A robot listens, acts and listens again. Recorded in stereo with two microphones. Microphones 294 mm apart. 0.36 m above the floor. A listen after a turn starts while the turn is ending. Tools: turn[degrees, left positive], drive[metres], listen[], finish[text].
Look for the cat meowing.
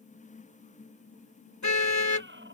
Thought: The cat meowing: about 40° right or 140° right.
Action: turn[-40]
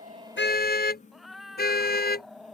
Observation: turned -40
Action: finish[Found it: a cat meowing, straight ahead.]